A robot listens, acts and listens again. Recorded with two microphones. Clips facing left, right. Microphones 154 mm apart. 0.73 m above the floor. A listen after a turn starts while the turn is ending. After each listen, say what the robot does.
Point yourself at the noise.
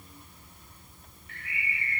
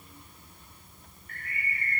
Turn 45° right.
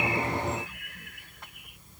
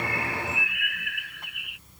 Turn 90° right.
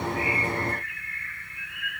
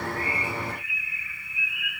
Facing the bird.